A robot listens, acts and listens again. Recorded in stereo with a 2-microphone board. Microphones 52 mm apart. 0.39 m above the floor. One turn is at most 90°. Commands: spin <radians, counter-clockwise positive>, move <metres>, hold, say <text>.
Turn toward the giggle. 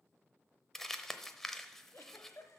spin 1.22
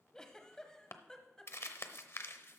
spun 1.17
spin 0.26
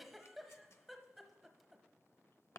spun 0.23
say Found it: a giggle, straight ahead, 1 to 2 m away.